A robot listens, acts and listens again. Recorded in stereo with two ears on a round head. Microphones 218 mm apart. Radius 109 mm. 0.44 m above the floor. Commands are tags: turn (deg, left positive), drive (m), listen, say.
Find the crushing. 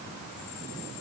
<listen/>
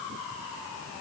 <listen/>
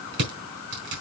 <turn deg="-50"/>
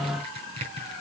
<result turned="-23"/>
<turn deg="-25"/>
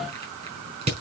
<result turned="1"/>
<turn deg="-30"/>
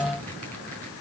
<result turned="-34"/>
<listen/>
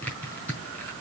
<say>Found it: crushing, straight ahead.</say>